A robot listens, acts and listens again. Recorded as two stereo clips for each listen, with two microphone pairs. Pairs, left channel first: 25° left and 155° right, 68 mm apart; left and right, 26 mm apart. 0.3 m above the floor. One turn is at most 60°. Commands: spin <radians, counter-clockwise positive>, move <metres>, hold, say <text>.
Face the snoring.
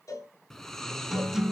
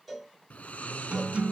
spin 1.05
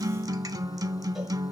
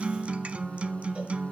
spin 0.96
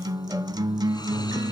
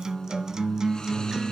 hold
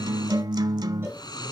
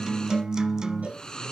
spin 0.44
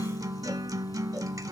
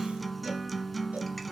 hold
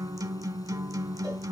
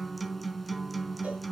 hold
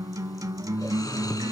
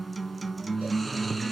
say Facing the snoring, 1 to 2 m away.